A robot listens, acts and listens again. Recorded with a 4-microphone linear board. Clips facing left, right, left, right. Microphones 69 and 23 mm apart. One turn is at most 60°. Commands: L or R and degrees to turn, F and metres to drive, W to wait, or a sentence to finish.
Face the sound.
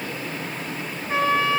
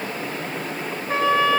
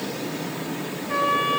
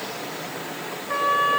R50
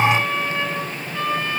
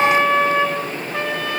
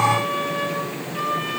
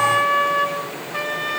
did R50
R60
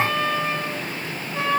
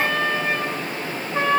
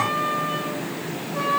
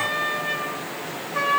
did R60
R30
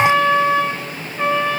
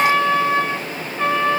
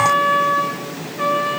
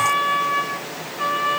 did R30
L30
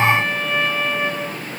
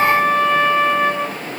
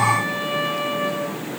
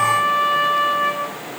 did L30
Facing the trumpet.